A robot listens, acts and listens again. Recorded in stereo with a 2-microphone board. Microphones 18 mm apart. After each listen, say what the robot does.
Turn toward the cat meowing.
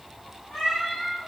Turn 30° left.
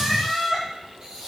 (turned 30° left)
Turn 15° left.
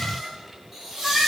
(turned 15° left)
Turn 30° left.
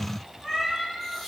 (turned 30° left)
Turn 165° left.
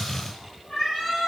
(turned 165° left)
Turn 30° left.
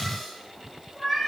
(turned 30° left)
Facing the cat meowing.